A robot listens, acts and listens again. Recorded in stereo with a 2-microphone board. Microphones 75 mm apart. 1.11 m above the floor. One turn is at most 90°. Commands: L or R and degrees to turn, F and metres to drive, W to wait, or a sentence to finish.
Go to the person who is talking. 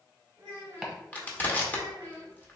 R40
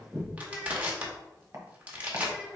F1.0
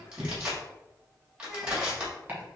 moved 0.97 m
F1.0
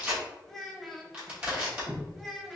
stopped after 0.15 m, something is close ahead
Arrived at the child speaking, straight ahead.